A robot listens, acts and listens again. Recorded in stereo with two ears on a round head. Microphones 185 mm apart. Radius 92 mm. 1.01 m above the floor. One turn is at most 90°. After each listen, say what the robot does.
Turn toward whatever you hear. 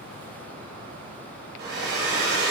Turn 50° right.
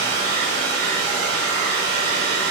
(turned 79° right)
Turn 50° right.
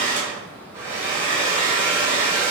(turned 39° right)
Turn 10° right.
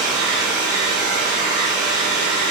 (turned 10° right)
Found it: a hair dryer, straight ahead, 1 to 2 m away.